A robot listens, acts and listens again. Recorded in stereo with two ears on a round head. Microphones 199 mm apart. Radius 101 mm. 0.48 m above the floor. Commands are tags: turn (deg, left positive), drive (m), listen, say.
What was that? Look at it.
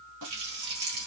<turn deg="-75"/>
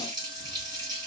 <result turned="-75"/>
<turn deg="-20"/>
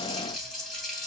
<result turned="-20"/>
<say>Facing the running tap, 2 to 4 m away.</say>